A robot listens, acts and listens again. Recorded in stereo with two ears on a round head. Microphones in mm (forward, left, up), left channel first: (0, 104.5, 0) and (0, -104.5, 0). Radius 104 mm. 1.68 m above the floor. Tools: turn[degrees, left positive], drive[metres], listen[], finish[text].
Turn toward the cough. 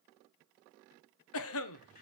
Thought: The cough: about 65° left or 115° left.
Action: turn[65]
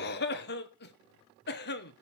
Thought: So it is at 45° left.
Action: turn[45]
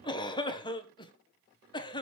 Thought: The cough is now 20° left.
Action: turn[20]
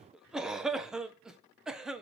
Action: finish[Found it: a cough, straight ahead.]